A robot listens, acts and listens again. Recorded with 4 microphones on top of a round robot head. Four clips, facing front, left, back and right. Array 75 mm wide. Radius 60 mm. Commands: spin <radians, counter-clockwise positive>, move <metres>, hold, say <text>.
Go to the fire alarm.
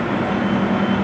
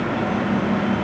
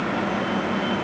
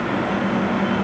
hold
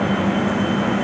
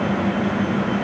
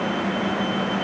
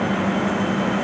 hold
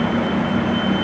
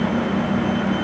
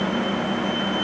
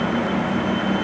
say I can't make out a fire alarm.